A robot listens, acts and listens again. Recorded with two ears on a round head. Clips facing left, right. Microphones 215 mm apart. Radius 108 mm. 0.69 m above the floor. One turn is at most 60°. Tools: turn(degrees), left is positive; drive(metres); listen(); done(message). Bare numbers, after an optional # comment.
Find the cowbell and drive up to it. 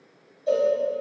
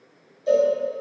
# The cowbell: about 35° right or 145° right.
turn(-35)
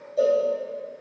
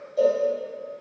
drive(1.0)
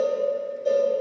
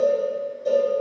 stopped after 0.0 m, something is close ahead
done("Something is in my way. I am facing the cowbell but have not reached it.")